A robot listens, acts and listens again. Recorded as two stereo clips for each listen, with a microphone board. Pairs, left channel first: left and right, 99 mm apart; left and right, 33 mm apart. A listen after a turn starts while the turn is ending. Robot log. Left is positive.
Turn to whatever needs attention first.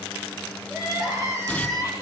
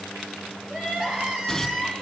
note: The crying: about 30° right or 150° right.
cmd yaw -30
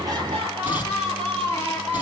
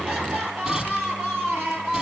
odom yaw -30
note: So it is at 115° right.
cmd yaw -115
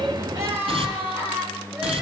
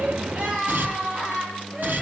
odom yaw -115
note: The crying is now 20° right.
cmd yaw -20
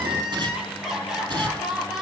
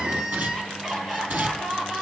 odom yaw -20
end: Found it: crying, straight ahead, over 4 m away.